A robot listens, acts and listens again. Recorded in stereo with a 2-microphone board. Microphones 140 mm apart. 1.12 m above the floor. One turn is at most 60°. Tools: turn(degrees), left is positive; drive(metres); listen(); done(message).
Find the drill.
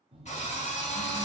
turn(degrees=55)
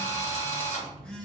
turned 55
turn(degrees=60)
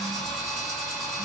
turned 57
done("Found it: a drill, straight ahead.")